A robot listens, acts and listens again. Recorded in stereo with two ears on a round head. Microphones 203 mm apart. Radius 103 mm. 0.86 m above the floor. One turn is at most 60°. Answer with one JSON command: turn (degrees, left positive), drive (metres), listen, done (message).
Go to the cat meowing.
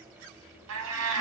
{"turn": -60}
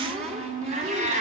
{"turn": -35}
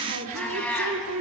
{"drive": 1.0}
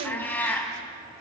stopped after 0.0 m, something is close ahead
{"turn": 10}
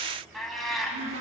{"done": "Something is in my way. I am facing the cat meowing but have not reached it."}